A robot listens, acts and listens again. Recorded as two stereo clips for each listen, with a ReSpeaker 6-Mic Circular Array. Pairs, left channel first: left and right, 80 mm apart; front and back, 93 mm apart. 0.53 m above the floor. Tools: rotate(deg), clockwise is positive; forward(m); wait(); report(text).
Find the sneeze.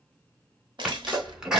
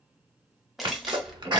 rotate(170)
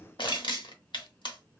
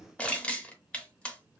report("I heard a sneeze from this way, but can't make it out now.")